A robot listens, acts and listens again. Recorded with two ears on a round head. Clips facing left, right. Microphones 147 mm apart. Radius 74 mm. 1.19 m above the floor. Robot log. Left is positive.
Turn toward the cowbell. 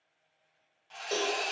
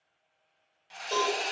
note: The cowbell: about 15° left or 165° left.
cmd yaw +15
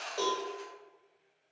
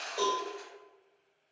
end: Found it: a cowbell, straight ahead, 1 to 2 m away.